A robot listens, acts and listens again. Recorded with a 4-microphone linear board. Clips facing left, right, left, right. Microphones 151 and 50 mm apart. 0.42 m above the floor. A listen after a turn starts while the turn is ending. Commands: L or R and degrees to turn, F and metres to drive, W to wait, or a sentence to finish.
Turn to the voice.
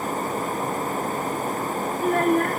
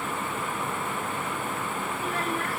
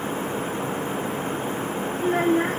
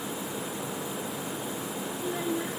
L55
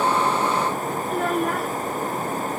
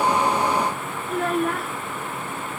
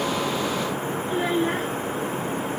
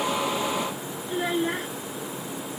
Facing the child speaking.